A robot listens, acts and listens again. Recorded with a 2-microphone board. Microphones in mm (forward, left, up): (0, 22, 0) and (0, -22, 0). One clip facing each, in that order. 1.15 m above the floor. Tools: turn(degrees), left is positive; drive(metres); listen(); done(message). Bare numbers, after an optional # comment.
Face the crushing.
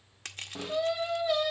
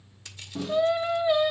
# The crushing: about 55° left or 125° left.
turn(55)
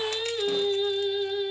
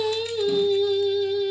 listen()
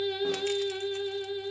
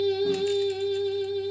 listen()
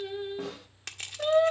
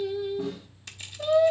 # So it is at 65° left.
turn(65)
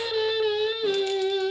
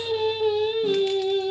listen()
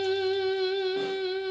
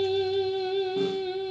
listen()
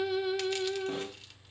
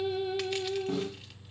done("I heard crushing from this way, but can't make it out now.")